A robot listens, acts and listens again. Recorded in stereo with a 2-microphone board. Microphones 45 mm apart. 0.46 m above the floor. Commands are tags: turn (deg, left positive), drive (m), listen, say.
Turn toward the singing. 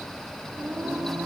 <turn deg="-70"/>
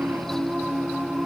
<turn deg="-20"/>
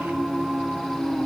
<say>Found it: singing, straight ahead.</say>